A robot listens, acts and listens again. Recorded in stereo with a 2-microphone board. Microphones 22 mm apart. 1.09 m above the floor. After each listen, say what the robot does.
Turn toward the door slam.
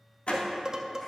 Turn 90° left.
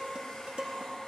Facing where the door slam came from. I can't hear it now.